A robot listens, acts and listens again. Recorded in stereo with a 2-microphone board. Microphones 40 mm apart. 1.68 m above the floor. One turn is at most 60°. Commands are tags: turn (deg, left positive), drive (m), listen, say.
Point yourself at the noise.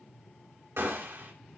<turn deg="-60"/>
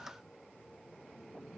<listen/>
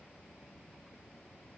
<say>I heard a gunshot, but can't make it out now. It was about 10° right or 50° right.</say>